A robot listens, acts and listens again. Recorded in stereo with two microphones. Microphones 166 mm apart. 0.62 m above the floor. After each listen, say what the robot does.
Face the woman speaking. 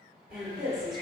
Turn 30° left.
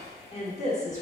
Turn 135° left.
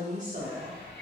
Turn 50° right.
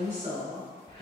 Turn 25° right.
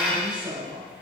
Facing the woman speaking, 1 to 2 m away.